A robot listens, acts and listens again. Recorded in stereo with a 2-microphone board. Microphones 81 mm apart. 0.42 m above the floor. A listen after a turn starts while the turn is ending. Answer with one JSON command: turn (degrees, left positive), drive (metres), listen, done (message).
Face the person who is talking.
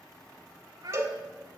{"turn": -60}
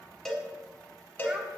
{"listen": true}
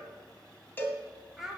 {"done": "Found it: a child speaking, straight ahead."}